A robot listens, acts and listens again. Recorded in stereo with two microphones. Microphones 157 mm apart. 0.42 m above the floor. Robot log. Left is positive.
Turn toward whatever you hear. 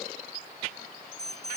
note: The alarm: about 40° right or 140° right.
cmd yaw -40
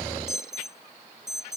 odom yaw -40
end: Found it: an alarm, straight ahead.